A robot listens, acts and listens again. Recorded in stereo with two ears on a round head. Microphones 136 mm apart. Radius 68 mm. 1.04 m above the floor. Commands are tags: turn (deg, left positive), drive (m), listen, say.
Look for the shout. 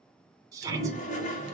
<turn deg="-20"/>
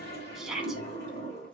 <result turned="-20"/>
<say>Found it: a shout, straight ahead.</say>